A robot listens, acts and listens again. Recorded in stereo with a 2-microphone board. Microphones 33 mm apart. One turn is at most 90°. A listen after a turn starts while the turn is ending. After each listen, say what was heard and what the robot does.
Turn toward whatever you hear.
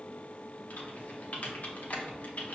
The typing on a keyboard: about 50° left or 130° left. Turn 50° left.
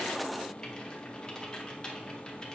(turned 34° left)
So it is at 25° left. Turn 25° left.
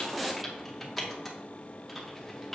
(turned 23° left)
Found it: typing on a keyboard, straight ahead, under 1 m away.